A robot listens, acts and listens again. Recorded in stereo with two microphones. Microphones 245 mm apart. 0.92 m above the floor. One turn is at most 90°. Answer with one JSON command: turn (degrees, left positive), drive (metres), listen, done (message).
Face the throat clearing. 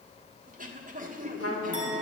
{"turn": -35}
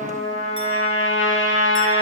{"listen": true}
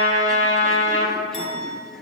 {"listen": true}
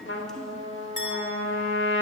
{"done": "I heard throat clearing, but can't make it out now. It was about straight ahead or 110° right."}